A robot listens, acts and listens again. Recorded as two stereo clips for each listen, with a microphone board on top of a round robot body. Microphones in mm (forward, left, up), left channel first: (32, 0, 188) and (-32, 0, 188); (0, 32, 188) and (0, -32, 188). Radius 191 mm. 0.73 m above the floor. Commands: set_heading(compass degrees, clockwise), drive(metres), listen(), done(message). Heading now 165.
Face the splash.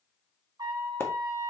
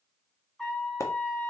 set_heading(115)
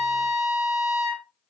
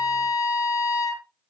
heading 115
done("I heard a splash from this way, but can't make it out now.")